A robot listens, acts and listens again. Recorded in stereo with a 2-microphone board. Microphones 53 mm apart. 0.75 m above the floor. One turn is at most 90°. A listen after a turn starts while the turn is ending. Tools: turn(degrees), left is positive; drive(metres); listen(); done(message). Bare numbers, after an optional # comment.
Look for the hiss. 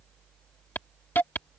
# The hiss: about 40° left or 140° left.
turn(40)
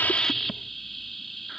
done("Found it: a hiss, straight ahead.")